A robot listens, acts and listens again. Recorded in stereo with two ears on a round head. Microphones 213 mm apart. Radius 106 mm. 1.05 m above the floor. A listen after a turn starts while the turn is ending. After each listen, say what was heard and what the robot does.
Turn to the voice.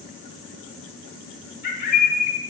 Keep listening.
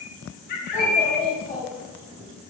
Turn 30° left.
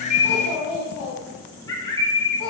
So it is at 150° left. Turn 150° left.
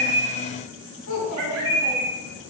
The child speaking is now 55° left. Turn 55° left.
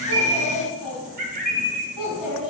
Facing the child speaking.